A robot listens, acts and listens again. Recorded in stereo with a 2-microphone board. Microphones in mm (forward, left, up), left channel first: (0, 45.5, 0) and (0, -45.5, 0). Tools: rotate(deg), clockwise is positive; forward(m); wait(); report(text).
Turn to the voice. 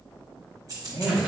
rotate(-60)
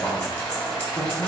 rotate(-50)
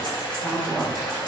report("Found it: a man speaking, straight ahead, 1 to 2 m away.")